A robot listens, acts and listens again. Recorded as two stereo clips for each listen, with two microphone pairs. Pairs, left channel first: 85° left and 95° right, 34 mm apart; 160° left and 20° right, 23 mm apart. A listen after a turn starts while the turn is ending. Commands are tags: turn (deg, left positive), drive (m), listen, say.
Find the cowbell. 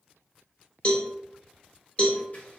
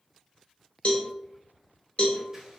<turn deg="130"/>
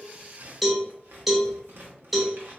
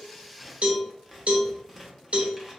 <turn deg="-10"/>
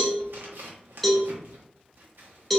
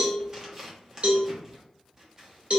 <say>Facing the cowbell, under 1 m away.</say>